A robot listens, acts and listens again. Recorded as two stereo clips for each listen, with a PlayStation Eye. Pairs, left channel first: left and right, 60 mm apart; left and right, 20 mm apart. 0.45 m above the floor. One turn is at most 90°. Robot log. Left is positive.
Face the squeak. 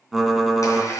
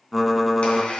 note: The squeak: about 70° left or 110° left.
cmd yaw +70
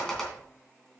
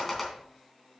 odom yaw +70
note: So it is at 10° left.
cmd yaw +10
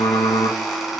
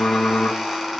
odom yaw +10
end: Found it: a squeak, straight ahead.